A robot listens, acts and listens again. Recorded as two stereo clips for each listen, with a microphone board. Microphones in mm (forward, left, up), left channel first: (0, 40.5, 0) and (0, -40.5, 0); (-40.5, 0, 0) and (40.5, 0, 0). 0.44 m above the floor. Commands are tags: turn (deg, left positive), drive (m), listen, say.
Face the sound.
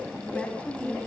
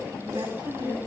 <turn deg="15"/>
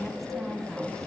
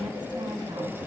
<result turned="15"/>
<listen/>
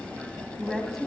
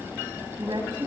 <say>Facing the woman speaking, 2 to 4 m away.</say>